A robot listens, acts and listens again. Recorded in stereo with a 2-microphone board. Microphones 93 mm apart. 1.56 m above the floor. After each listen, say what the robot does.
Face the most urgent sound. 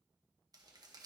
Keep listening.
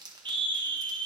Turn 60° right.
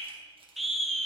Found it: a scream, straight ahead.